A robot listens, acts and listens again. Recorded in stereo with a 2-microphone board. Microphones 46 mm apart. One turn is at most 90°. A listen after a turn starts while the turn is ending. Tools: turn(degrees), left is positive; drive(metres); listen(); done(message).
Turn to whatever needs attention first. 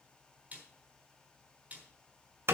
listen()
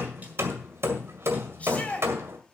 turn(degrees=30)
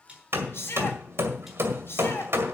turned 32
turn(degrees=90)
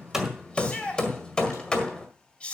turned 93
turn(degrees=30)
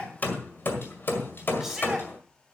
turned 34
done("Found it: a shout, straight ahead.")